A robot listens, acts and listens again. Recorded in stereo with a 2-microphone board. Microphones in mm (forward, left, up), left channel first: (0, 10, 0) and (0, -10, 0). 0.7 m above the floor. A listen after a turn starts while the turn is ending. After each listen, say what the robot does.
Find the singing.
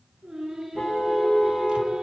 Turn 35° right.
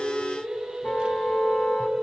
Turn 110° right.
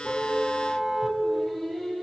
Facing the singing, over 4 m away.